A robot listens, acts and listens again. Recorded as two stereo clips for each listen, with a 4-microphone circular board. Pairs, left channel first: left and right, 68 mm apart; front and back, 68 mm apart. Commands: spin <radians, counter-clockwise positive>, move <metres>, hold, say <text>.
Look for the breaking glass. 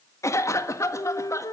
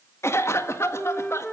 hold
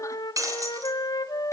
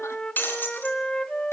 spin -1.05
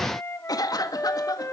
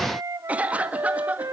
say Facing where the breaking glass came from. I can't hear it now.